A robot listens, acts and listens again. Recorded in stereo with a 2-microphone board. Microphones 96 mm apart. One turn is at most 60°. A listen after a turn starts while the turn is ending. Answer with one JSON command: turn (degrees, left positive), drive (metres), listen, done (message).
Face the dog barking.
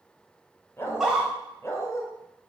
{"turn": 30}
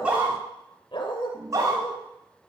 {"turn": 60}
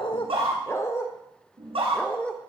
{"turn": 10}
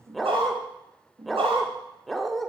{"done": "Found it: a dog barking, straight ahead, 1 to 2 m away."}